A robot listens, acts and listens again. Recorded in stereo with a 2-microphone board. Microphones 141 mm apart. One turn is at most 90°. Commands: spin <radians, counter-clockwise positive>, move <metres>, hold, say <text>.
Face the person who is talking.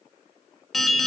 hold
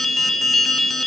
hold
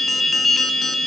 say I can't make out anyone speaking, only an alarm.